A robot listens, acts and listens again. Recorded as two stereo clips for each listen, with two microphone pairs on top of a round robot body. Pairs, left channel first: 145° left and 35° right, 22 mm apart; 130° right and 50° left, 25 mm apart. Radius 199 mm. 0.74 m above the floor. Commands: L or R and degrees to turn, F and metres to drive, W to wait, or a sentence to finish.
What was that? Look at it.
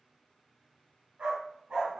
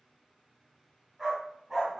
R25
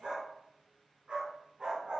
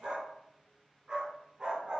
Facing the dog barking.